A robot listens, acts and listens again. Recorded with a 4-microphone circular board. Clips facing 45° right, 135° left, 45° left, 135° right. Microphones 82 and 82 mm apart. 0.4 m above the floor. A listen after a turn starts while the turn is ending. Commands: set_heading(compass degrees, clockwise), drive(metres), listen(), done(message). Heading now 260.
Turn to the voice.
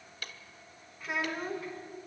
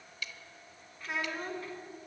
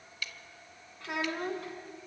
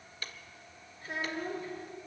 set_heading(220)
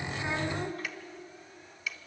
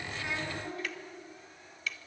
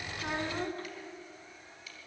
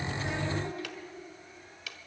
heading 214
done("Facing the child speaking.")